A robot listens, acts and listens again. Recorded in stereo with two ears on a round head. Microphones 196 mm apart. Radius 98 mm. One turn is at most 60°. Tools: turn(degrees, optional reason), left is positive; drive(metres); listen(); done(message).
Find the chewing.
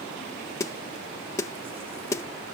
listen()
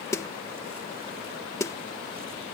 listen()
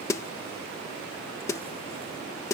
done("I can't make out chewing, only a snare drum.")